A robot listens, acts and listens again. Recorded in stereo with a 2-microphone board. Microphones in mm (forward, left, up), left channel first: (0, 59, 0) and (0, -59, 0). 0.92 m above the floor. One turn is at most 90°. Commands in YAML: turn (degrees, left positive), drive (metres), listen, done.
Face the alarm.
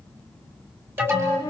turn: -15
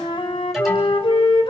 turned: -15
done: "Found it: an alarm, straight ahead."